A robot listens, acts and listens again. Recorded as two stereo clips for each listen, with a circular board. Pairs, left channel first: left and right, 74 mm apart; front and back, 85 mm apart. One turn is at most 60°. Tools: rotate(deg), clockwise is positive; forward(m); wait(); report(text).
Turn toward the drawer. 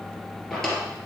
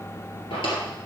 report("Facing the drawer, 2 to 4 m away.")